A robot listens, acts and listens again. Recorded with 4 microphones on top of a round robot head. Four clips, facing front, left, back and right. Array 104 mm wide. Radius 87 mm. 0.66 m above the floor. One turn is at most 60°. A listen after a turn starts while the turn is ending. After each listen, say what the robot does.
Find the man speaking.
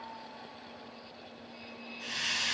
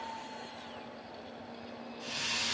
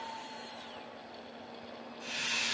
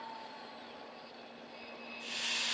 Keep listening.
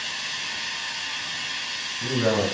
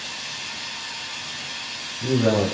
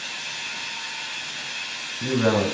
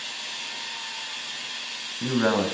Turn 60° right.
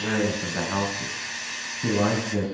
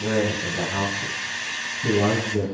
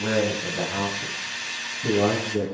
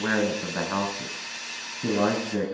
Turn 55° right.
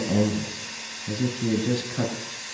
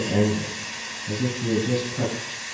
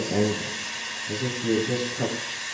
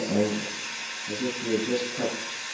Facing the man speaking, over 4 m away.